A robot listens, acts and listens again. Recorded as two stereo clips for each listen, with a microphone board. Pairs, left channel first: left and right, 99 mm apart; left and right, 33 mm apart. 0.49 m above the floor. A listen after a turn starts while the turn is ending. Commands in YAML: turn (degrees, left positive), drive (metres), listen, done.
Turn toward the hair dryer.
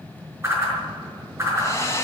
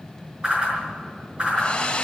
turn: 35
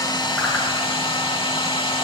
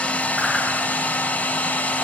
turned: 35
turn: 110
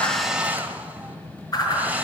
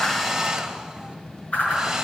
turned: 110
turn: -20
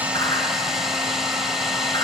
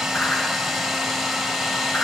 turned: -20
done: "Facing the hair dryer, 1 to 2 m away."